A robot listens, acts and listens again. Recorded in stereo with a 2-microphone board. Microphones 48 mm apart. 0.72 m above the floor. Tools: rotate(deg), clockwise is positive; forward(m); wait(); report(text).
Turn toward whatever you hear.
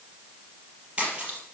rotate(25)
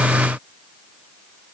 wait()
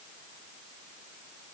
report("I heard a splash, but can't make it out now. It was about straight ahead or 130° right.")